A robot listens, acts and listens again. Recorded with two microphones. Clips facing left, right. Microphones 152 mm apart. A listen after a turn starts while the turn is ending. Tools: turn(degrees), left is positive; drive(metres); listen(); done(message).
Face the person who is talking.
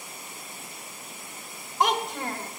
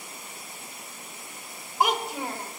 turn(degrees=-30)
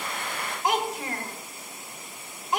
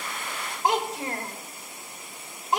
turn(degrees=-145)
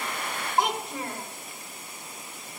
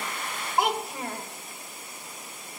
done("Found it: a child speaking, straight ahead.")